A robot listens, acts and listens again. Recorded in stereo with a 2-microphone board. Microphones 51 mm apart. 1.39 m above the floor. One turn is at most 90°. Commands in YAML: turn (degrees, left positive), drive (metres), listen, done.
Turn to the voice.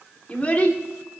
turn: 30
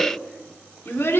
turn: 90
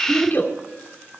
turn: 45
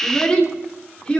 turn: 20
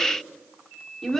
done: "Facing the child speaking, 2 to 4 m away."